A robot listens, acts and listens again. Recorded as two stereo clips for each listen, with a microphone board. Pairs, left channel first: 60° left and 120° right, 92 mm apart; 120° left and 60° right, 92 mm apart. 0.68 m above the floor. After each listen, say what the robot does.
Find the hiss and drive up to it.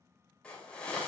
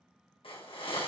Turn 140° left.
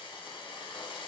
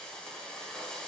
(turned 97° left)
Turn 40° left.
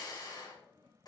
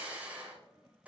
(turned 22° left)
Turn 15° left.
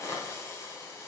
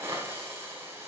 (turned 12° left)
Drive 1.0 m forward.
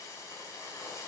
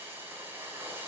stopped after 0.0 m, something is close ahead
Turn 10° left.
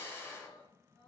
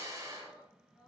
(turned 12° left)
Blocked. The hiss is further on, straight ahead.